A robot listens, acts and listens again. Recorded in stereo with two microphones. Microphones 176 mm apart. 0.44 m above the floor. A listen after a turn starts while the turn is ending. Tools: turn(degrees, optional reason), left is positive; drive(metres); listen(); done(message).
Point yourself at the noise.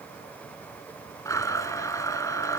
turn(degrees=20, reason="The blender: about 20° left or 160° left.")
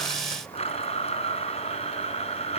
turn(degrees=145, reason="So it is at 145° left.")
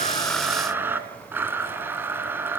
turn(degrees=-10, reason="The blender is now 10° right.")
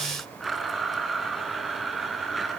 done("Found it: a blender, straight ahead, 2 to 4 m away.")